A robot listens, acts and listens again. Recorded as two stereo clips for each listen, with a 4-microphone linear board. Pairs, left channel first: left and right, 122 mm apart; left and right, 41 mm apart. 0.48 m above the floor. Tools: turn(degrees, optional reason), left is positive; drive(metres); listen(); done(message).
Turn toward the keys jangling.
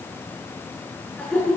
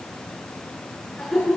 listen()
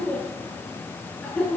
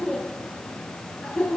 listen()
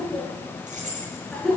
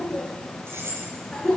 turn(degrees=-90)
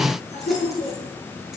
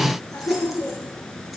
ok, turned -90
listen()
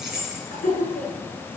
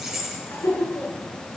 done("Facing the keys jangling.")